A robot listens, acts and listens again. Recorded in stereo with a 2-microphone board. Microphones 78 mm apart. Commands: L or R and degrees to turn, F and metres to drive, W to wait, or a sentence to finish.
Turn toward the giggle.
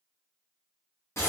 W
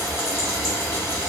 W
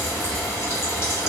I can't make out a giggle, only frying.